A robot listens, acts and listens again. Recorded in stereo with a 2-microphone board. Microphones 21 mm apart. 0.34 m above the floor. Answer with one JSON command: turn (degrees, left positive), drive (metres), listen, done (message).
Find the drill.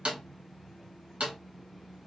{"listen": true}
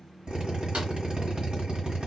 {"turn": -55}
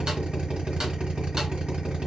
{"turn": -65}
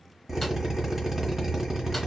{"turn": -10}
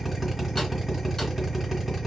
{"done": "Found it: a drill, straight ahead."}